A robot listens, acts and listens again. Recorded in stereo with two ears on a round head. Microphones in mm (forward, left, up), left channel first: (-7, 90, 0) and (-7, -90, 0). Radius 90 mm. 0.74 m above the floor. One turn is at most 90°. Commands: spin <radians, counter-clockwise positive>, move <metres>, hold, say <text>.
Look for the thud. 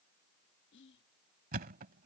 spin -0.79
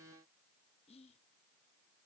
hold
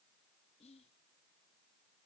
say I heard a thud, but can't make it out now. It was about straight ahead or 90° right.